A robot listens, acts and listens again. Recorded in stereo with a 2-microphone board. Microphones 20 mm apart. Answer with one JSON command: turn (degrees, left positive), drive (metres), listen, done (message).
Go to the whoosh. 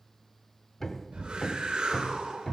{"turn": -70}
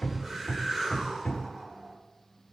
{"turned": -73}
{"turn": -25}
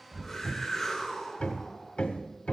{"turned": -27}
{"drive": 1.0}
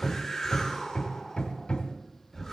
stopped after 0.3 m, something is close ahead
{"done": "Something is in my way. I am facing the whoosh but have not reached it."}